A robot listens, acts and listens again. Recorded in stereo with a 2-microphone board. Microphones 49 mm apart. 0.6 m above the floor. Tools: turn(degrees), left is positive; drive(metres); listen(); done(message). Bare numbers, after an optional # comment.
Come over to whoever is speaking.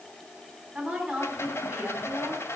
# The woman speaking: about 15° right or 165° right.
turn(-15)
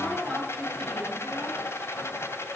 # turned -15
# So it is at 150° right.
turn(-150)
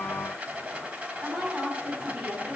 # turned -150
# The woman speaking is now 35° right.
turn(-35)
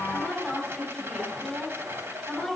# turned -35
drive(1.0)
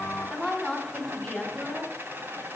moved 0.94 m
drive(1.0)
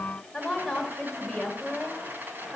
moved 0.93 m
drive(1.0)
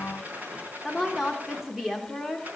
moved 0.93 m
drive(1.0)
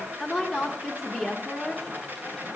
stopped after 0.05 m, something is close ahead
done("I am next to the woman speaking.")